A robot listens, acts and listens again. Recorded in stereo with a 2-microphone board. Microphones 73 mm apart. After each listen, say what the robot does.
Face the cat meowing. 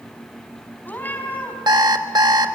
Turn 25° left.
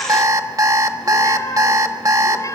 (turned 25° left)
Turn 130° left.
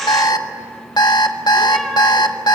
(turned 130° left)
Keep listening.
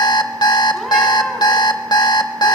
Keep listening.
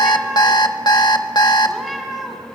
Found it: a cat meowing, straight ahead.